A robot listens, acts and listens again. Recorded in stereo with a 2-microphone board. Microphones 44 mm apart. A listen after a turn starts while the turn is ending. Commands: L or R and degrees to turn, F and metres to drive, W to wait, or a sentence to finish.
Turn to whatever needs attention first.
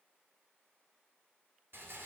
W
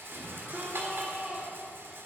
R35
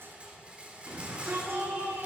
R110
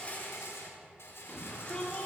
L25
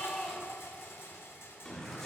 L10
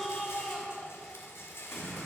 Facing the shout, 2 to 4 m away.